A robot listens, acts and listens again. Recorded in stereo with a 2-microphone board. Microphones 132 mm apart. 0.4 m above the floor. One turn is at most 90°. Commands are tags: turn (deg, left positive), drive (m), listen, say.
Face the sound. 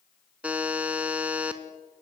<turn deg="-30"/>
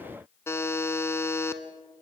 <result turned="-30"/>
<turn deg="20"/>
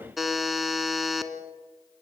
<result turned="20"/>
<say>Facing the buzzer, 1 to 2 m away.</say>